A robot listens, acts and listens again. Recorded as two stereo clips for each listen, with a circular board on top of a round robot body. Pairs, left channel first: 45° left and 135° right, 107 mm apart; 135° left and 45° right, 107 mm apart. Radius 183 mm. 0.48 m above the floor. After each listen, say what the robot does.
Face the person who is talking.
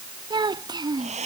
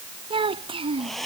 Turn 85° right.
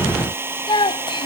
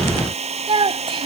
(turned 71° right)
Found it: a child speaking, straight ahead.